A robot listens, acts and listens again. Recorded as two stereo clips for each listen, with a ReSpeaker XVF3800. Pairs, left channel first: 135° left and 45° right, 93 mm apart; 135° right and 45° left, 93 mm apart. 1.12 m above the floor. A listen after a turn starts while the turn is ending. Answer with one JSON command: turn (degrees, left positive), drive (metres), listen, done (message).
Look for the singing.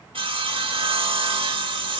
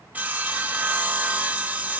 {"listen": true}
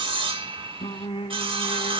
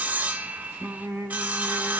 {"turn": 115}
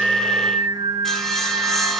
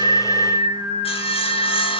{"done": "Found it: singing, straight ahead."}